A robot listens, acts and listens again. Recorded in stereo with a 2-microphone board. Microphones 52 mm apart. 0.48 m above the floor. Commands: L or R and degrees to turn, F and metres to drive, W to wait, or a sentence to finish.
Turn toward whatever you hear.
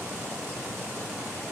W
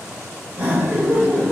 R40
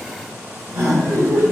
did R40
R95
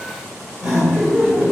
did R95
R10
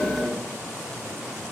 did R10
Facing the laughter.